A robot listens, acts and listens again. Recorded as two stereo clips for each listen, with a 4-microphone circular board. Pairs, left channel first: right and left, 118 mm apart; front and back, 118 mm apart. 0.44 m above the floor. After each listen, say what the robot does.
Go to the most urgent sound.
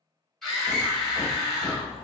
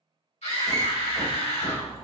Drive 1.0 m forward.
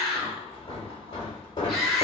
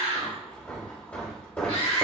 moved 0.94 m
Drive 1.0 m forward.
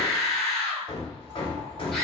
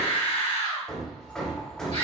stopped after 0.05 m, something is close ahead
I am next to the scream.